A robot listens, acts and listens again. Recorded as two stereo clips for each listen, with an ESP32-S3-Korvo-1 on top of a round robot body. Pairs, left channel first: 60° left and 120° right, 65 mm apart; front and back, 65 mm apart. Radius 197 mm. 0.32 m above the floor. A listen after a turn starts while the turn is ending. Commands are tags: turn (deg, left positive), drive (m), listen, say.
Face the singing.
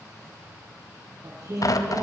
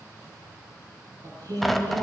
<turn deg="-155"/>
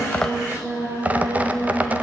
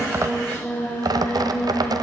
<turn deg="-70"/>
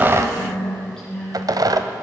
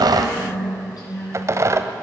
<turn deg="-25"/>
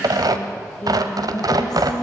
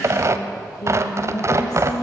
<turn deg="-25"/>
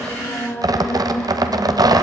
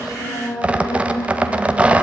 <say>Found it: singing, straight ahead.</say>